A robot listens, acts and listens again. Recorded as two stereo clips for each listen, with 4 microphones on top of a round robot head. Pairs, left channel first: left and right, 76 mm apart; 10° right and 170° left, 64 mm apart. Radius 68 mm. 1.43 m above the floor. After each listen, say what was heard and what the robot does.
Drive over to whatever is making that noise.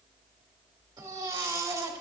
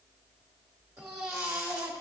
The baby crying: 135° right. Turn 135° right.
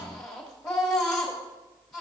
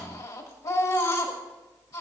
Drive 1.0 m forward.
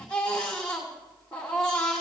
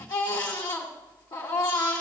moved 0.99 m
The baby crying is now 10° left. Turn 10° left.
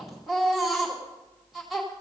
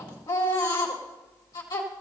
Drive 1.0 m forward.
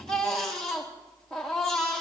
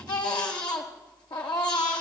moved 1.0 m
Drive 1.0 m forward.
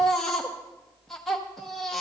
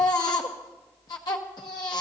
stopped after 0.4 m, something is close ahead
Arrived at the baby crying, straight ahead.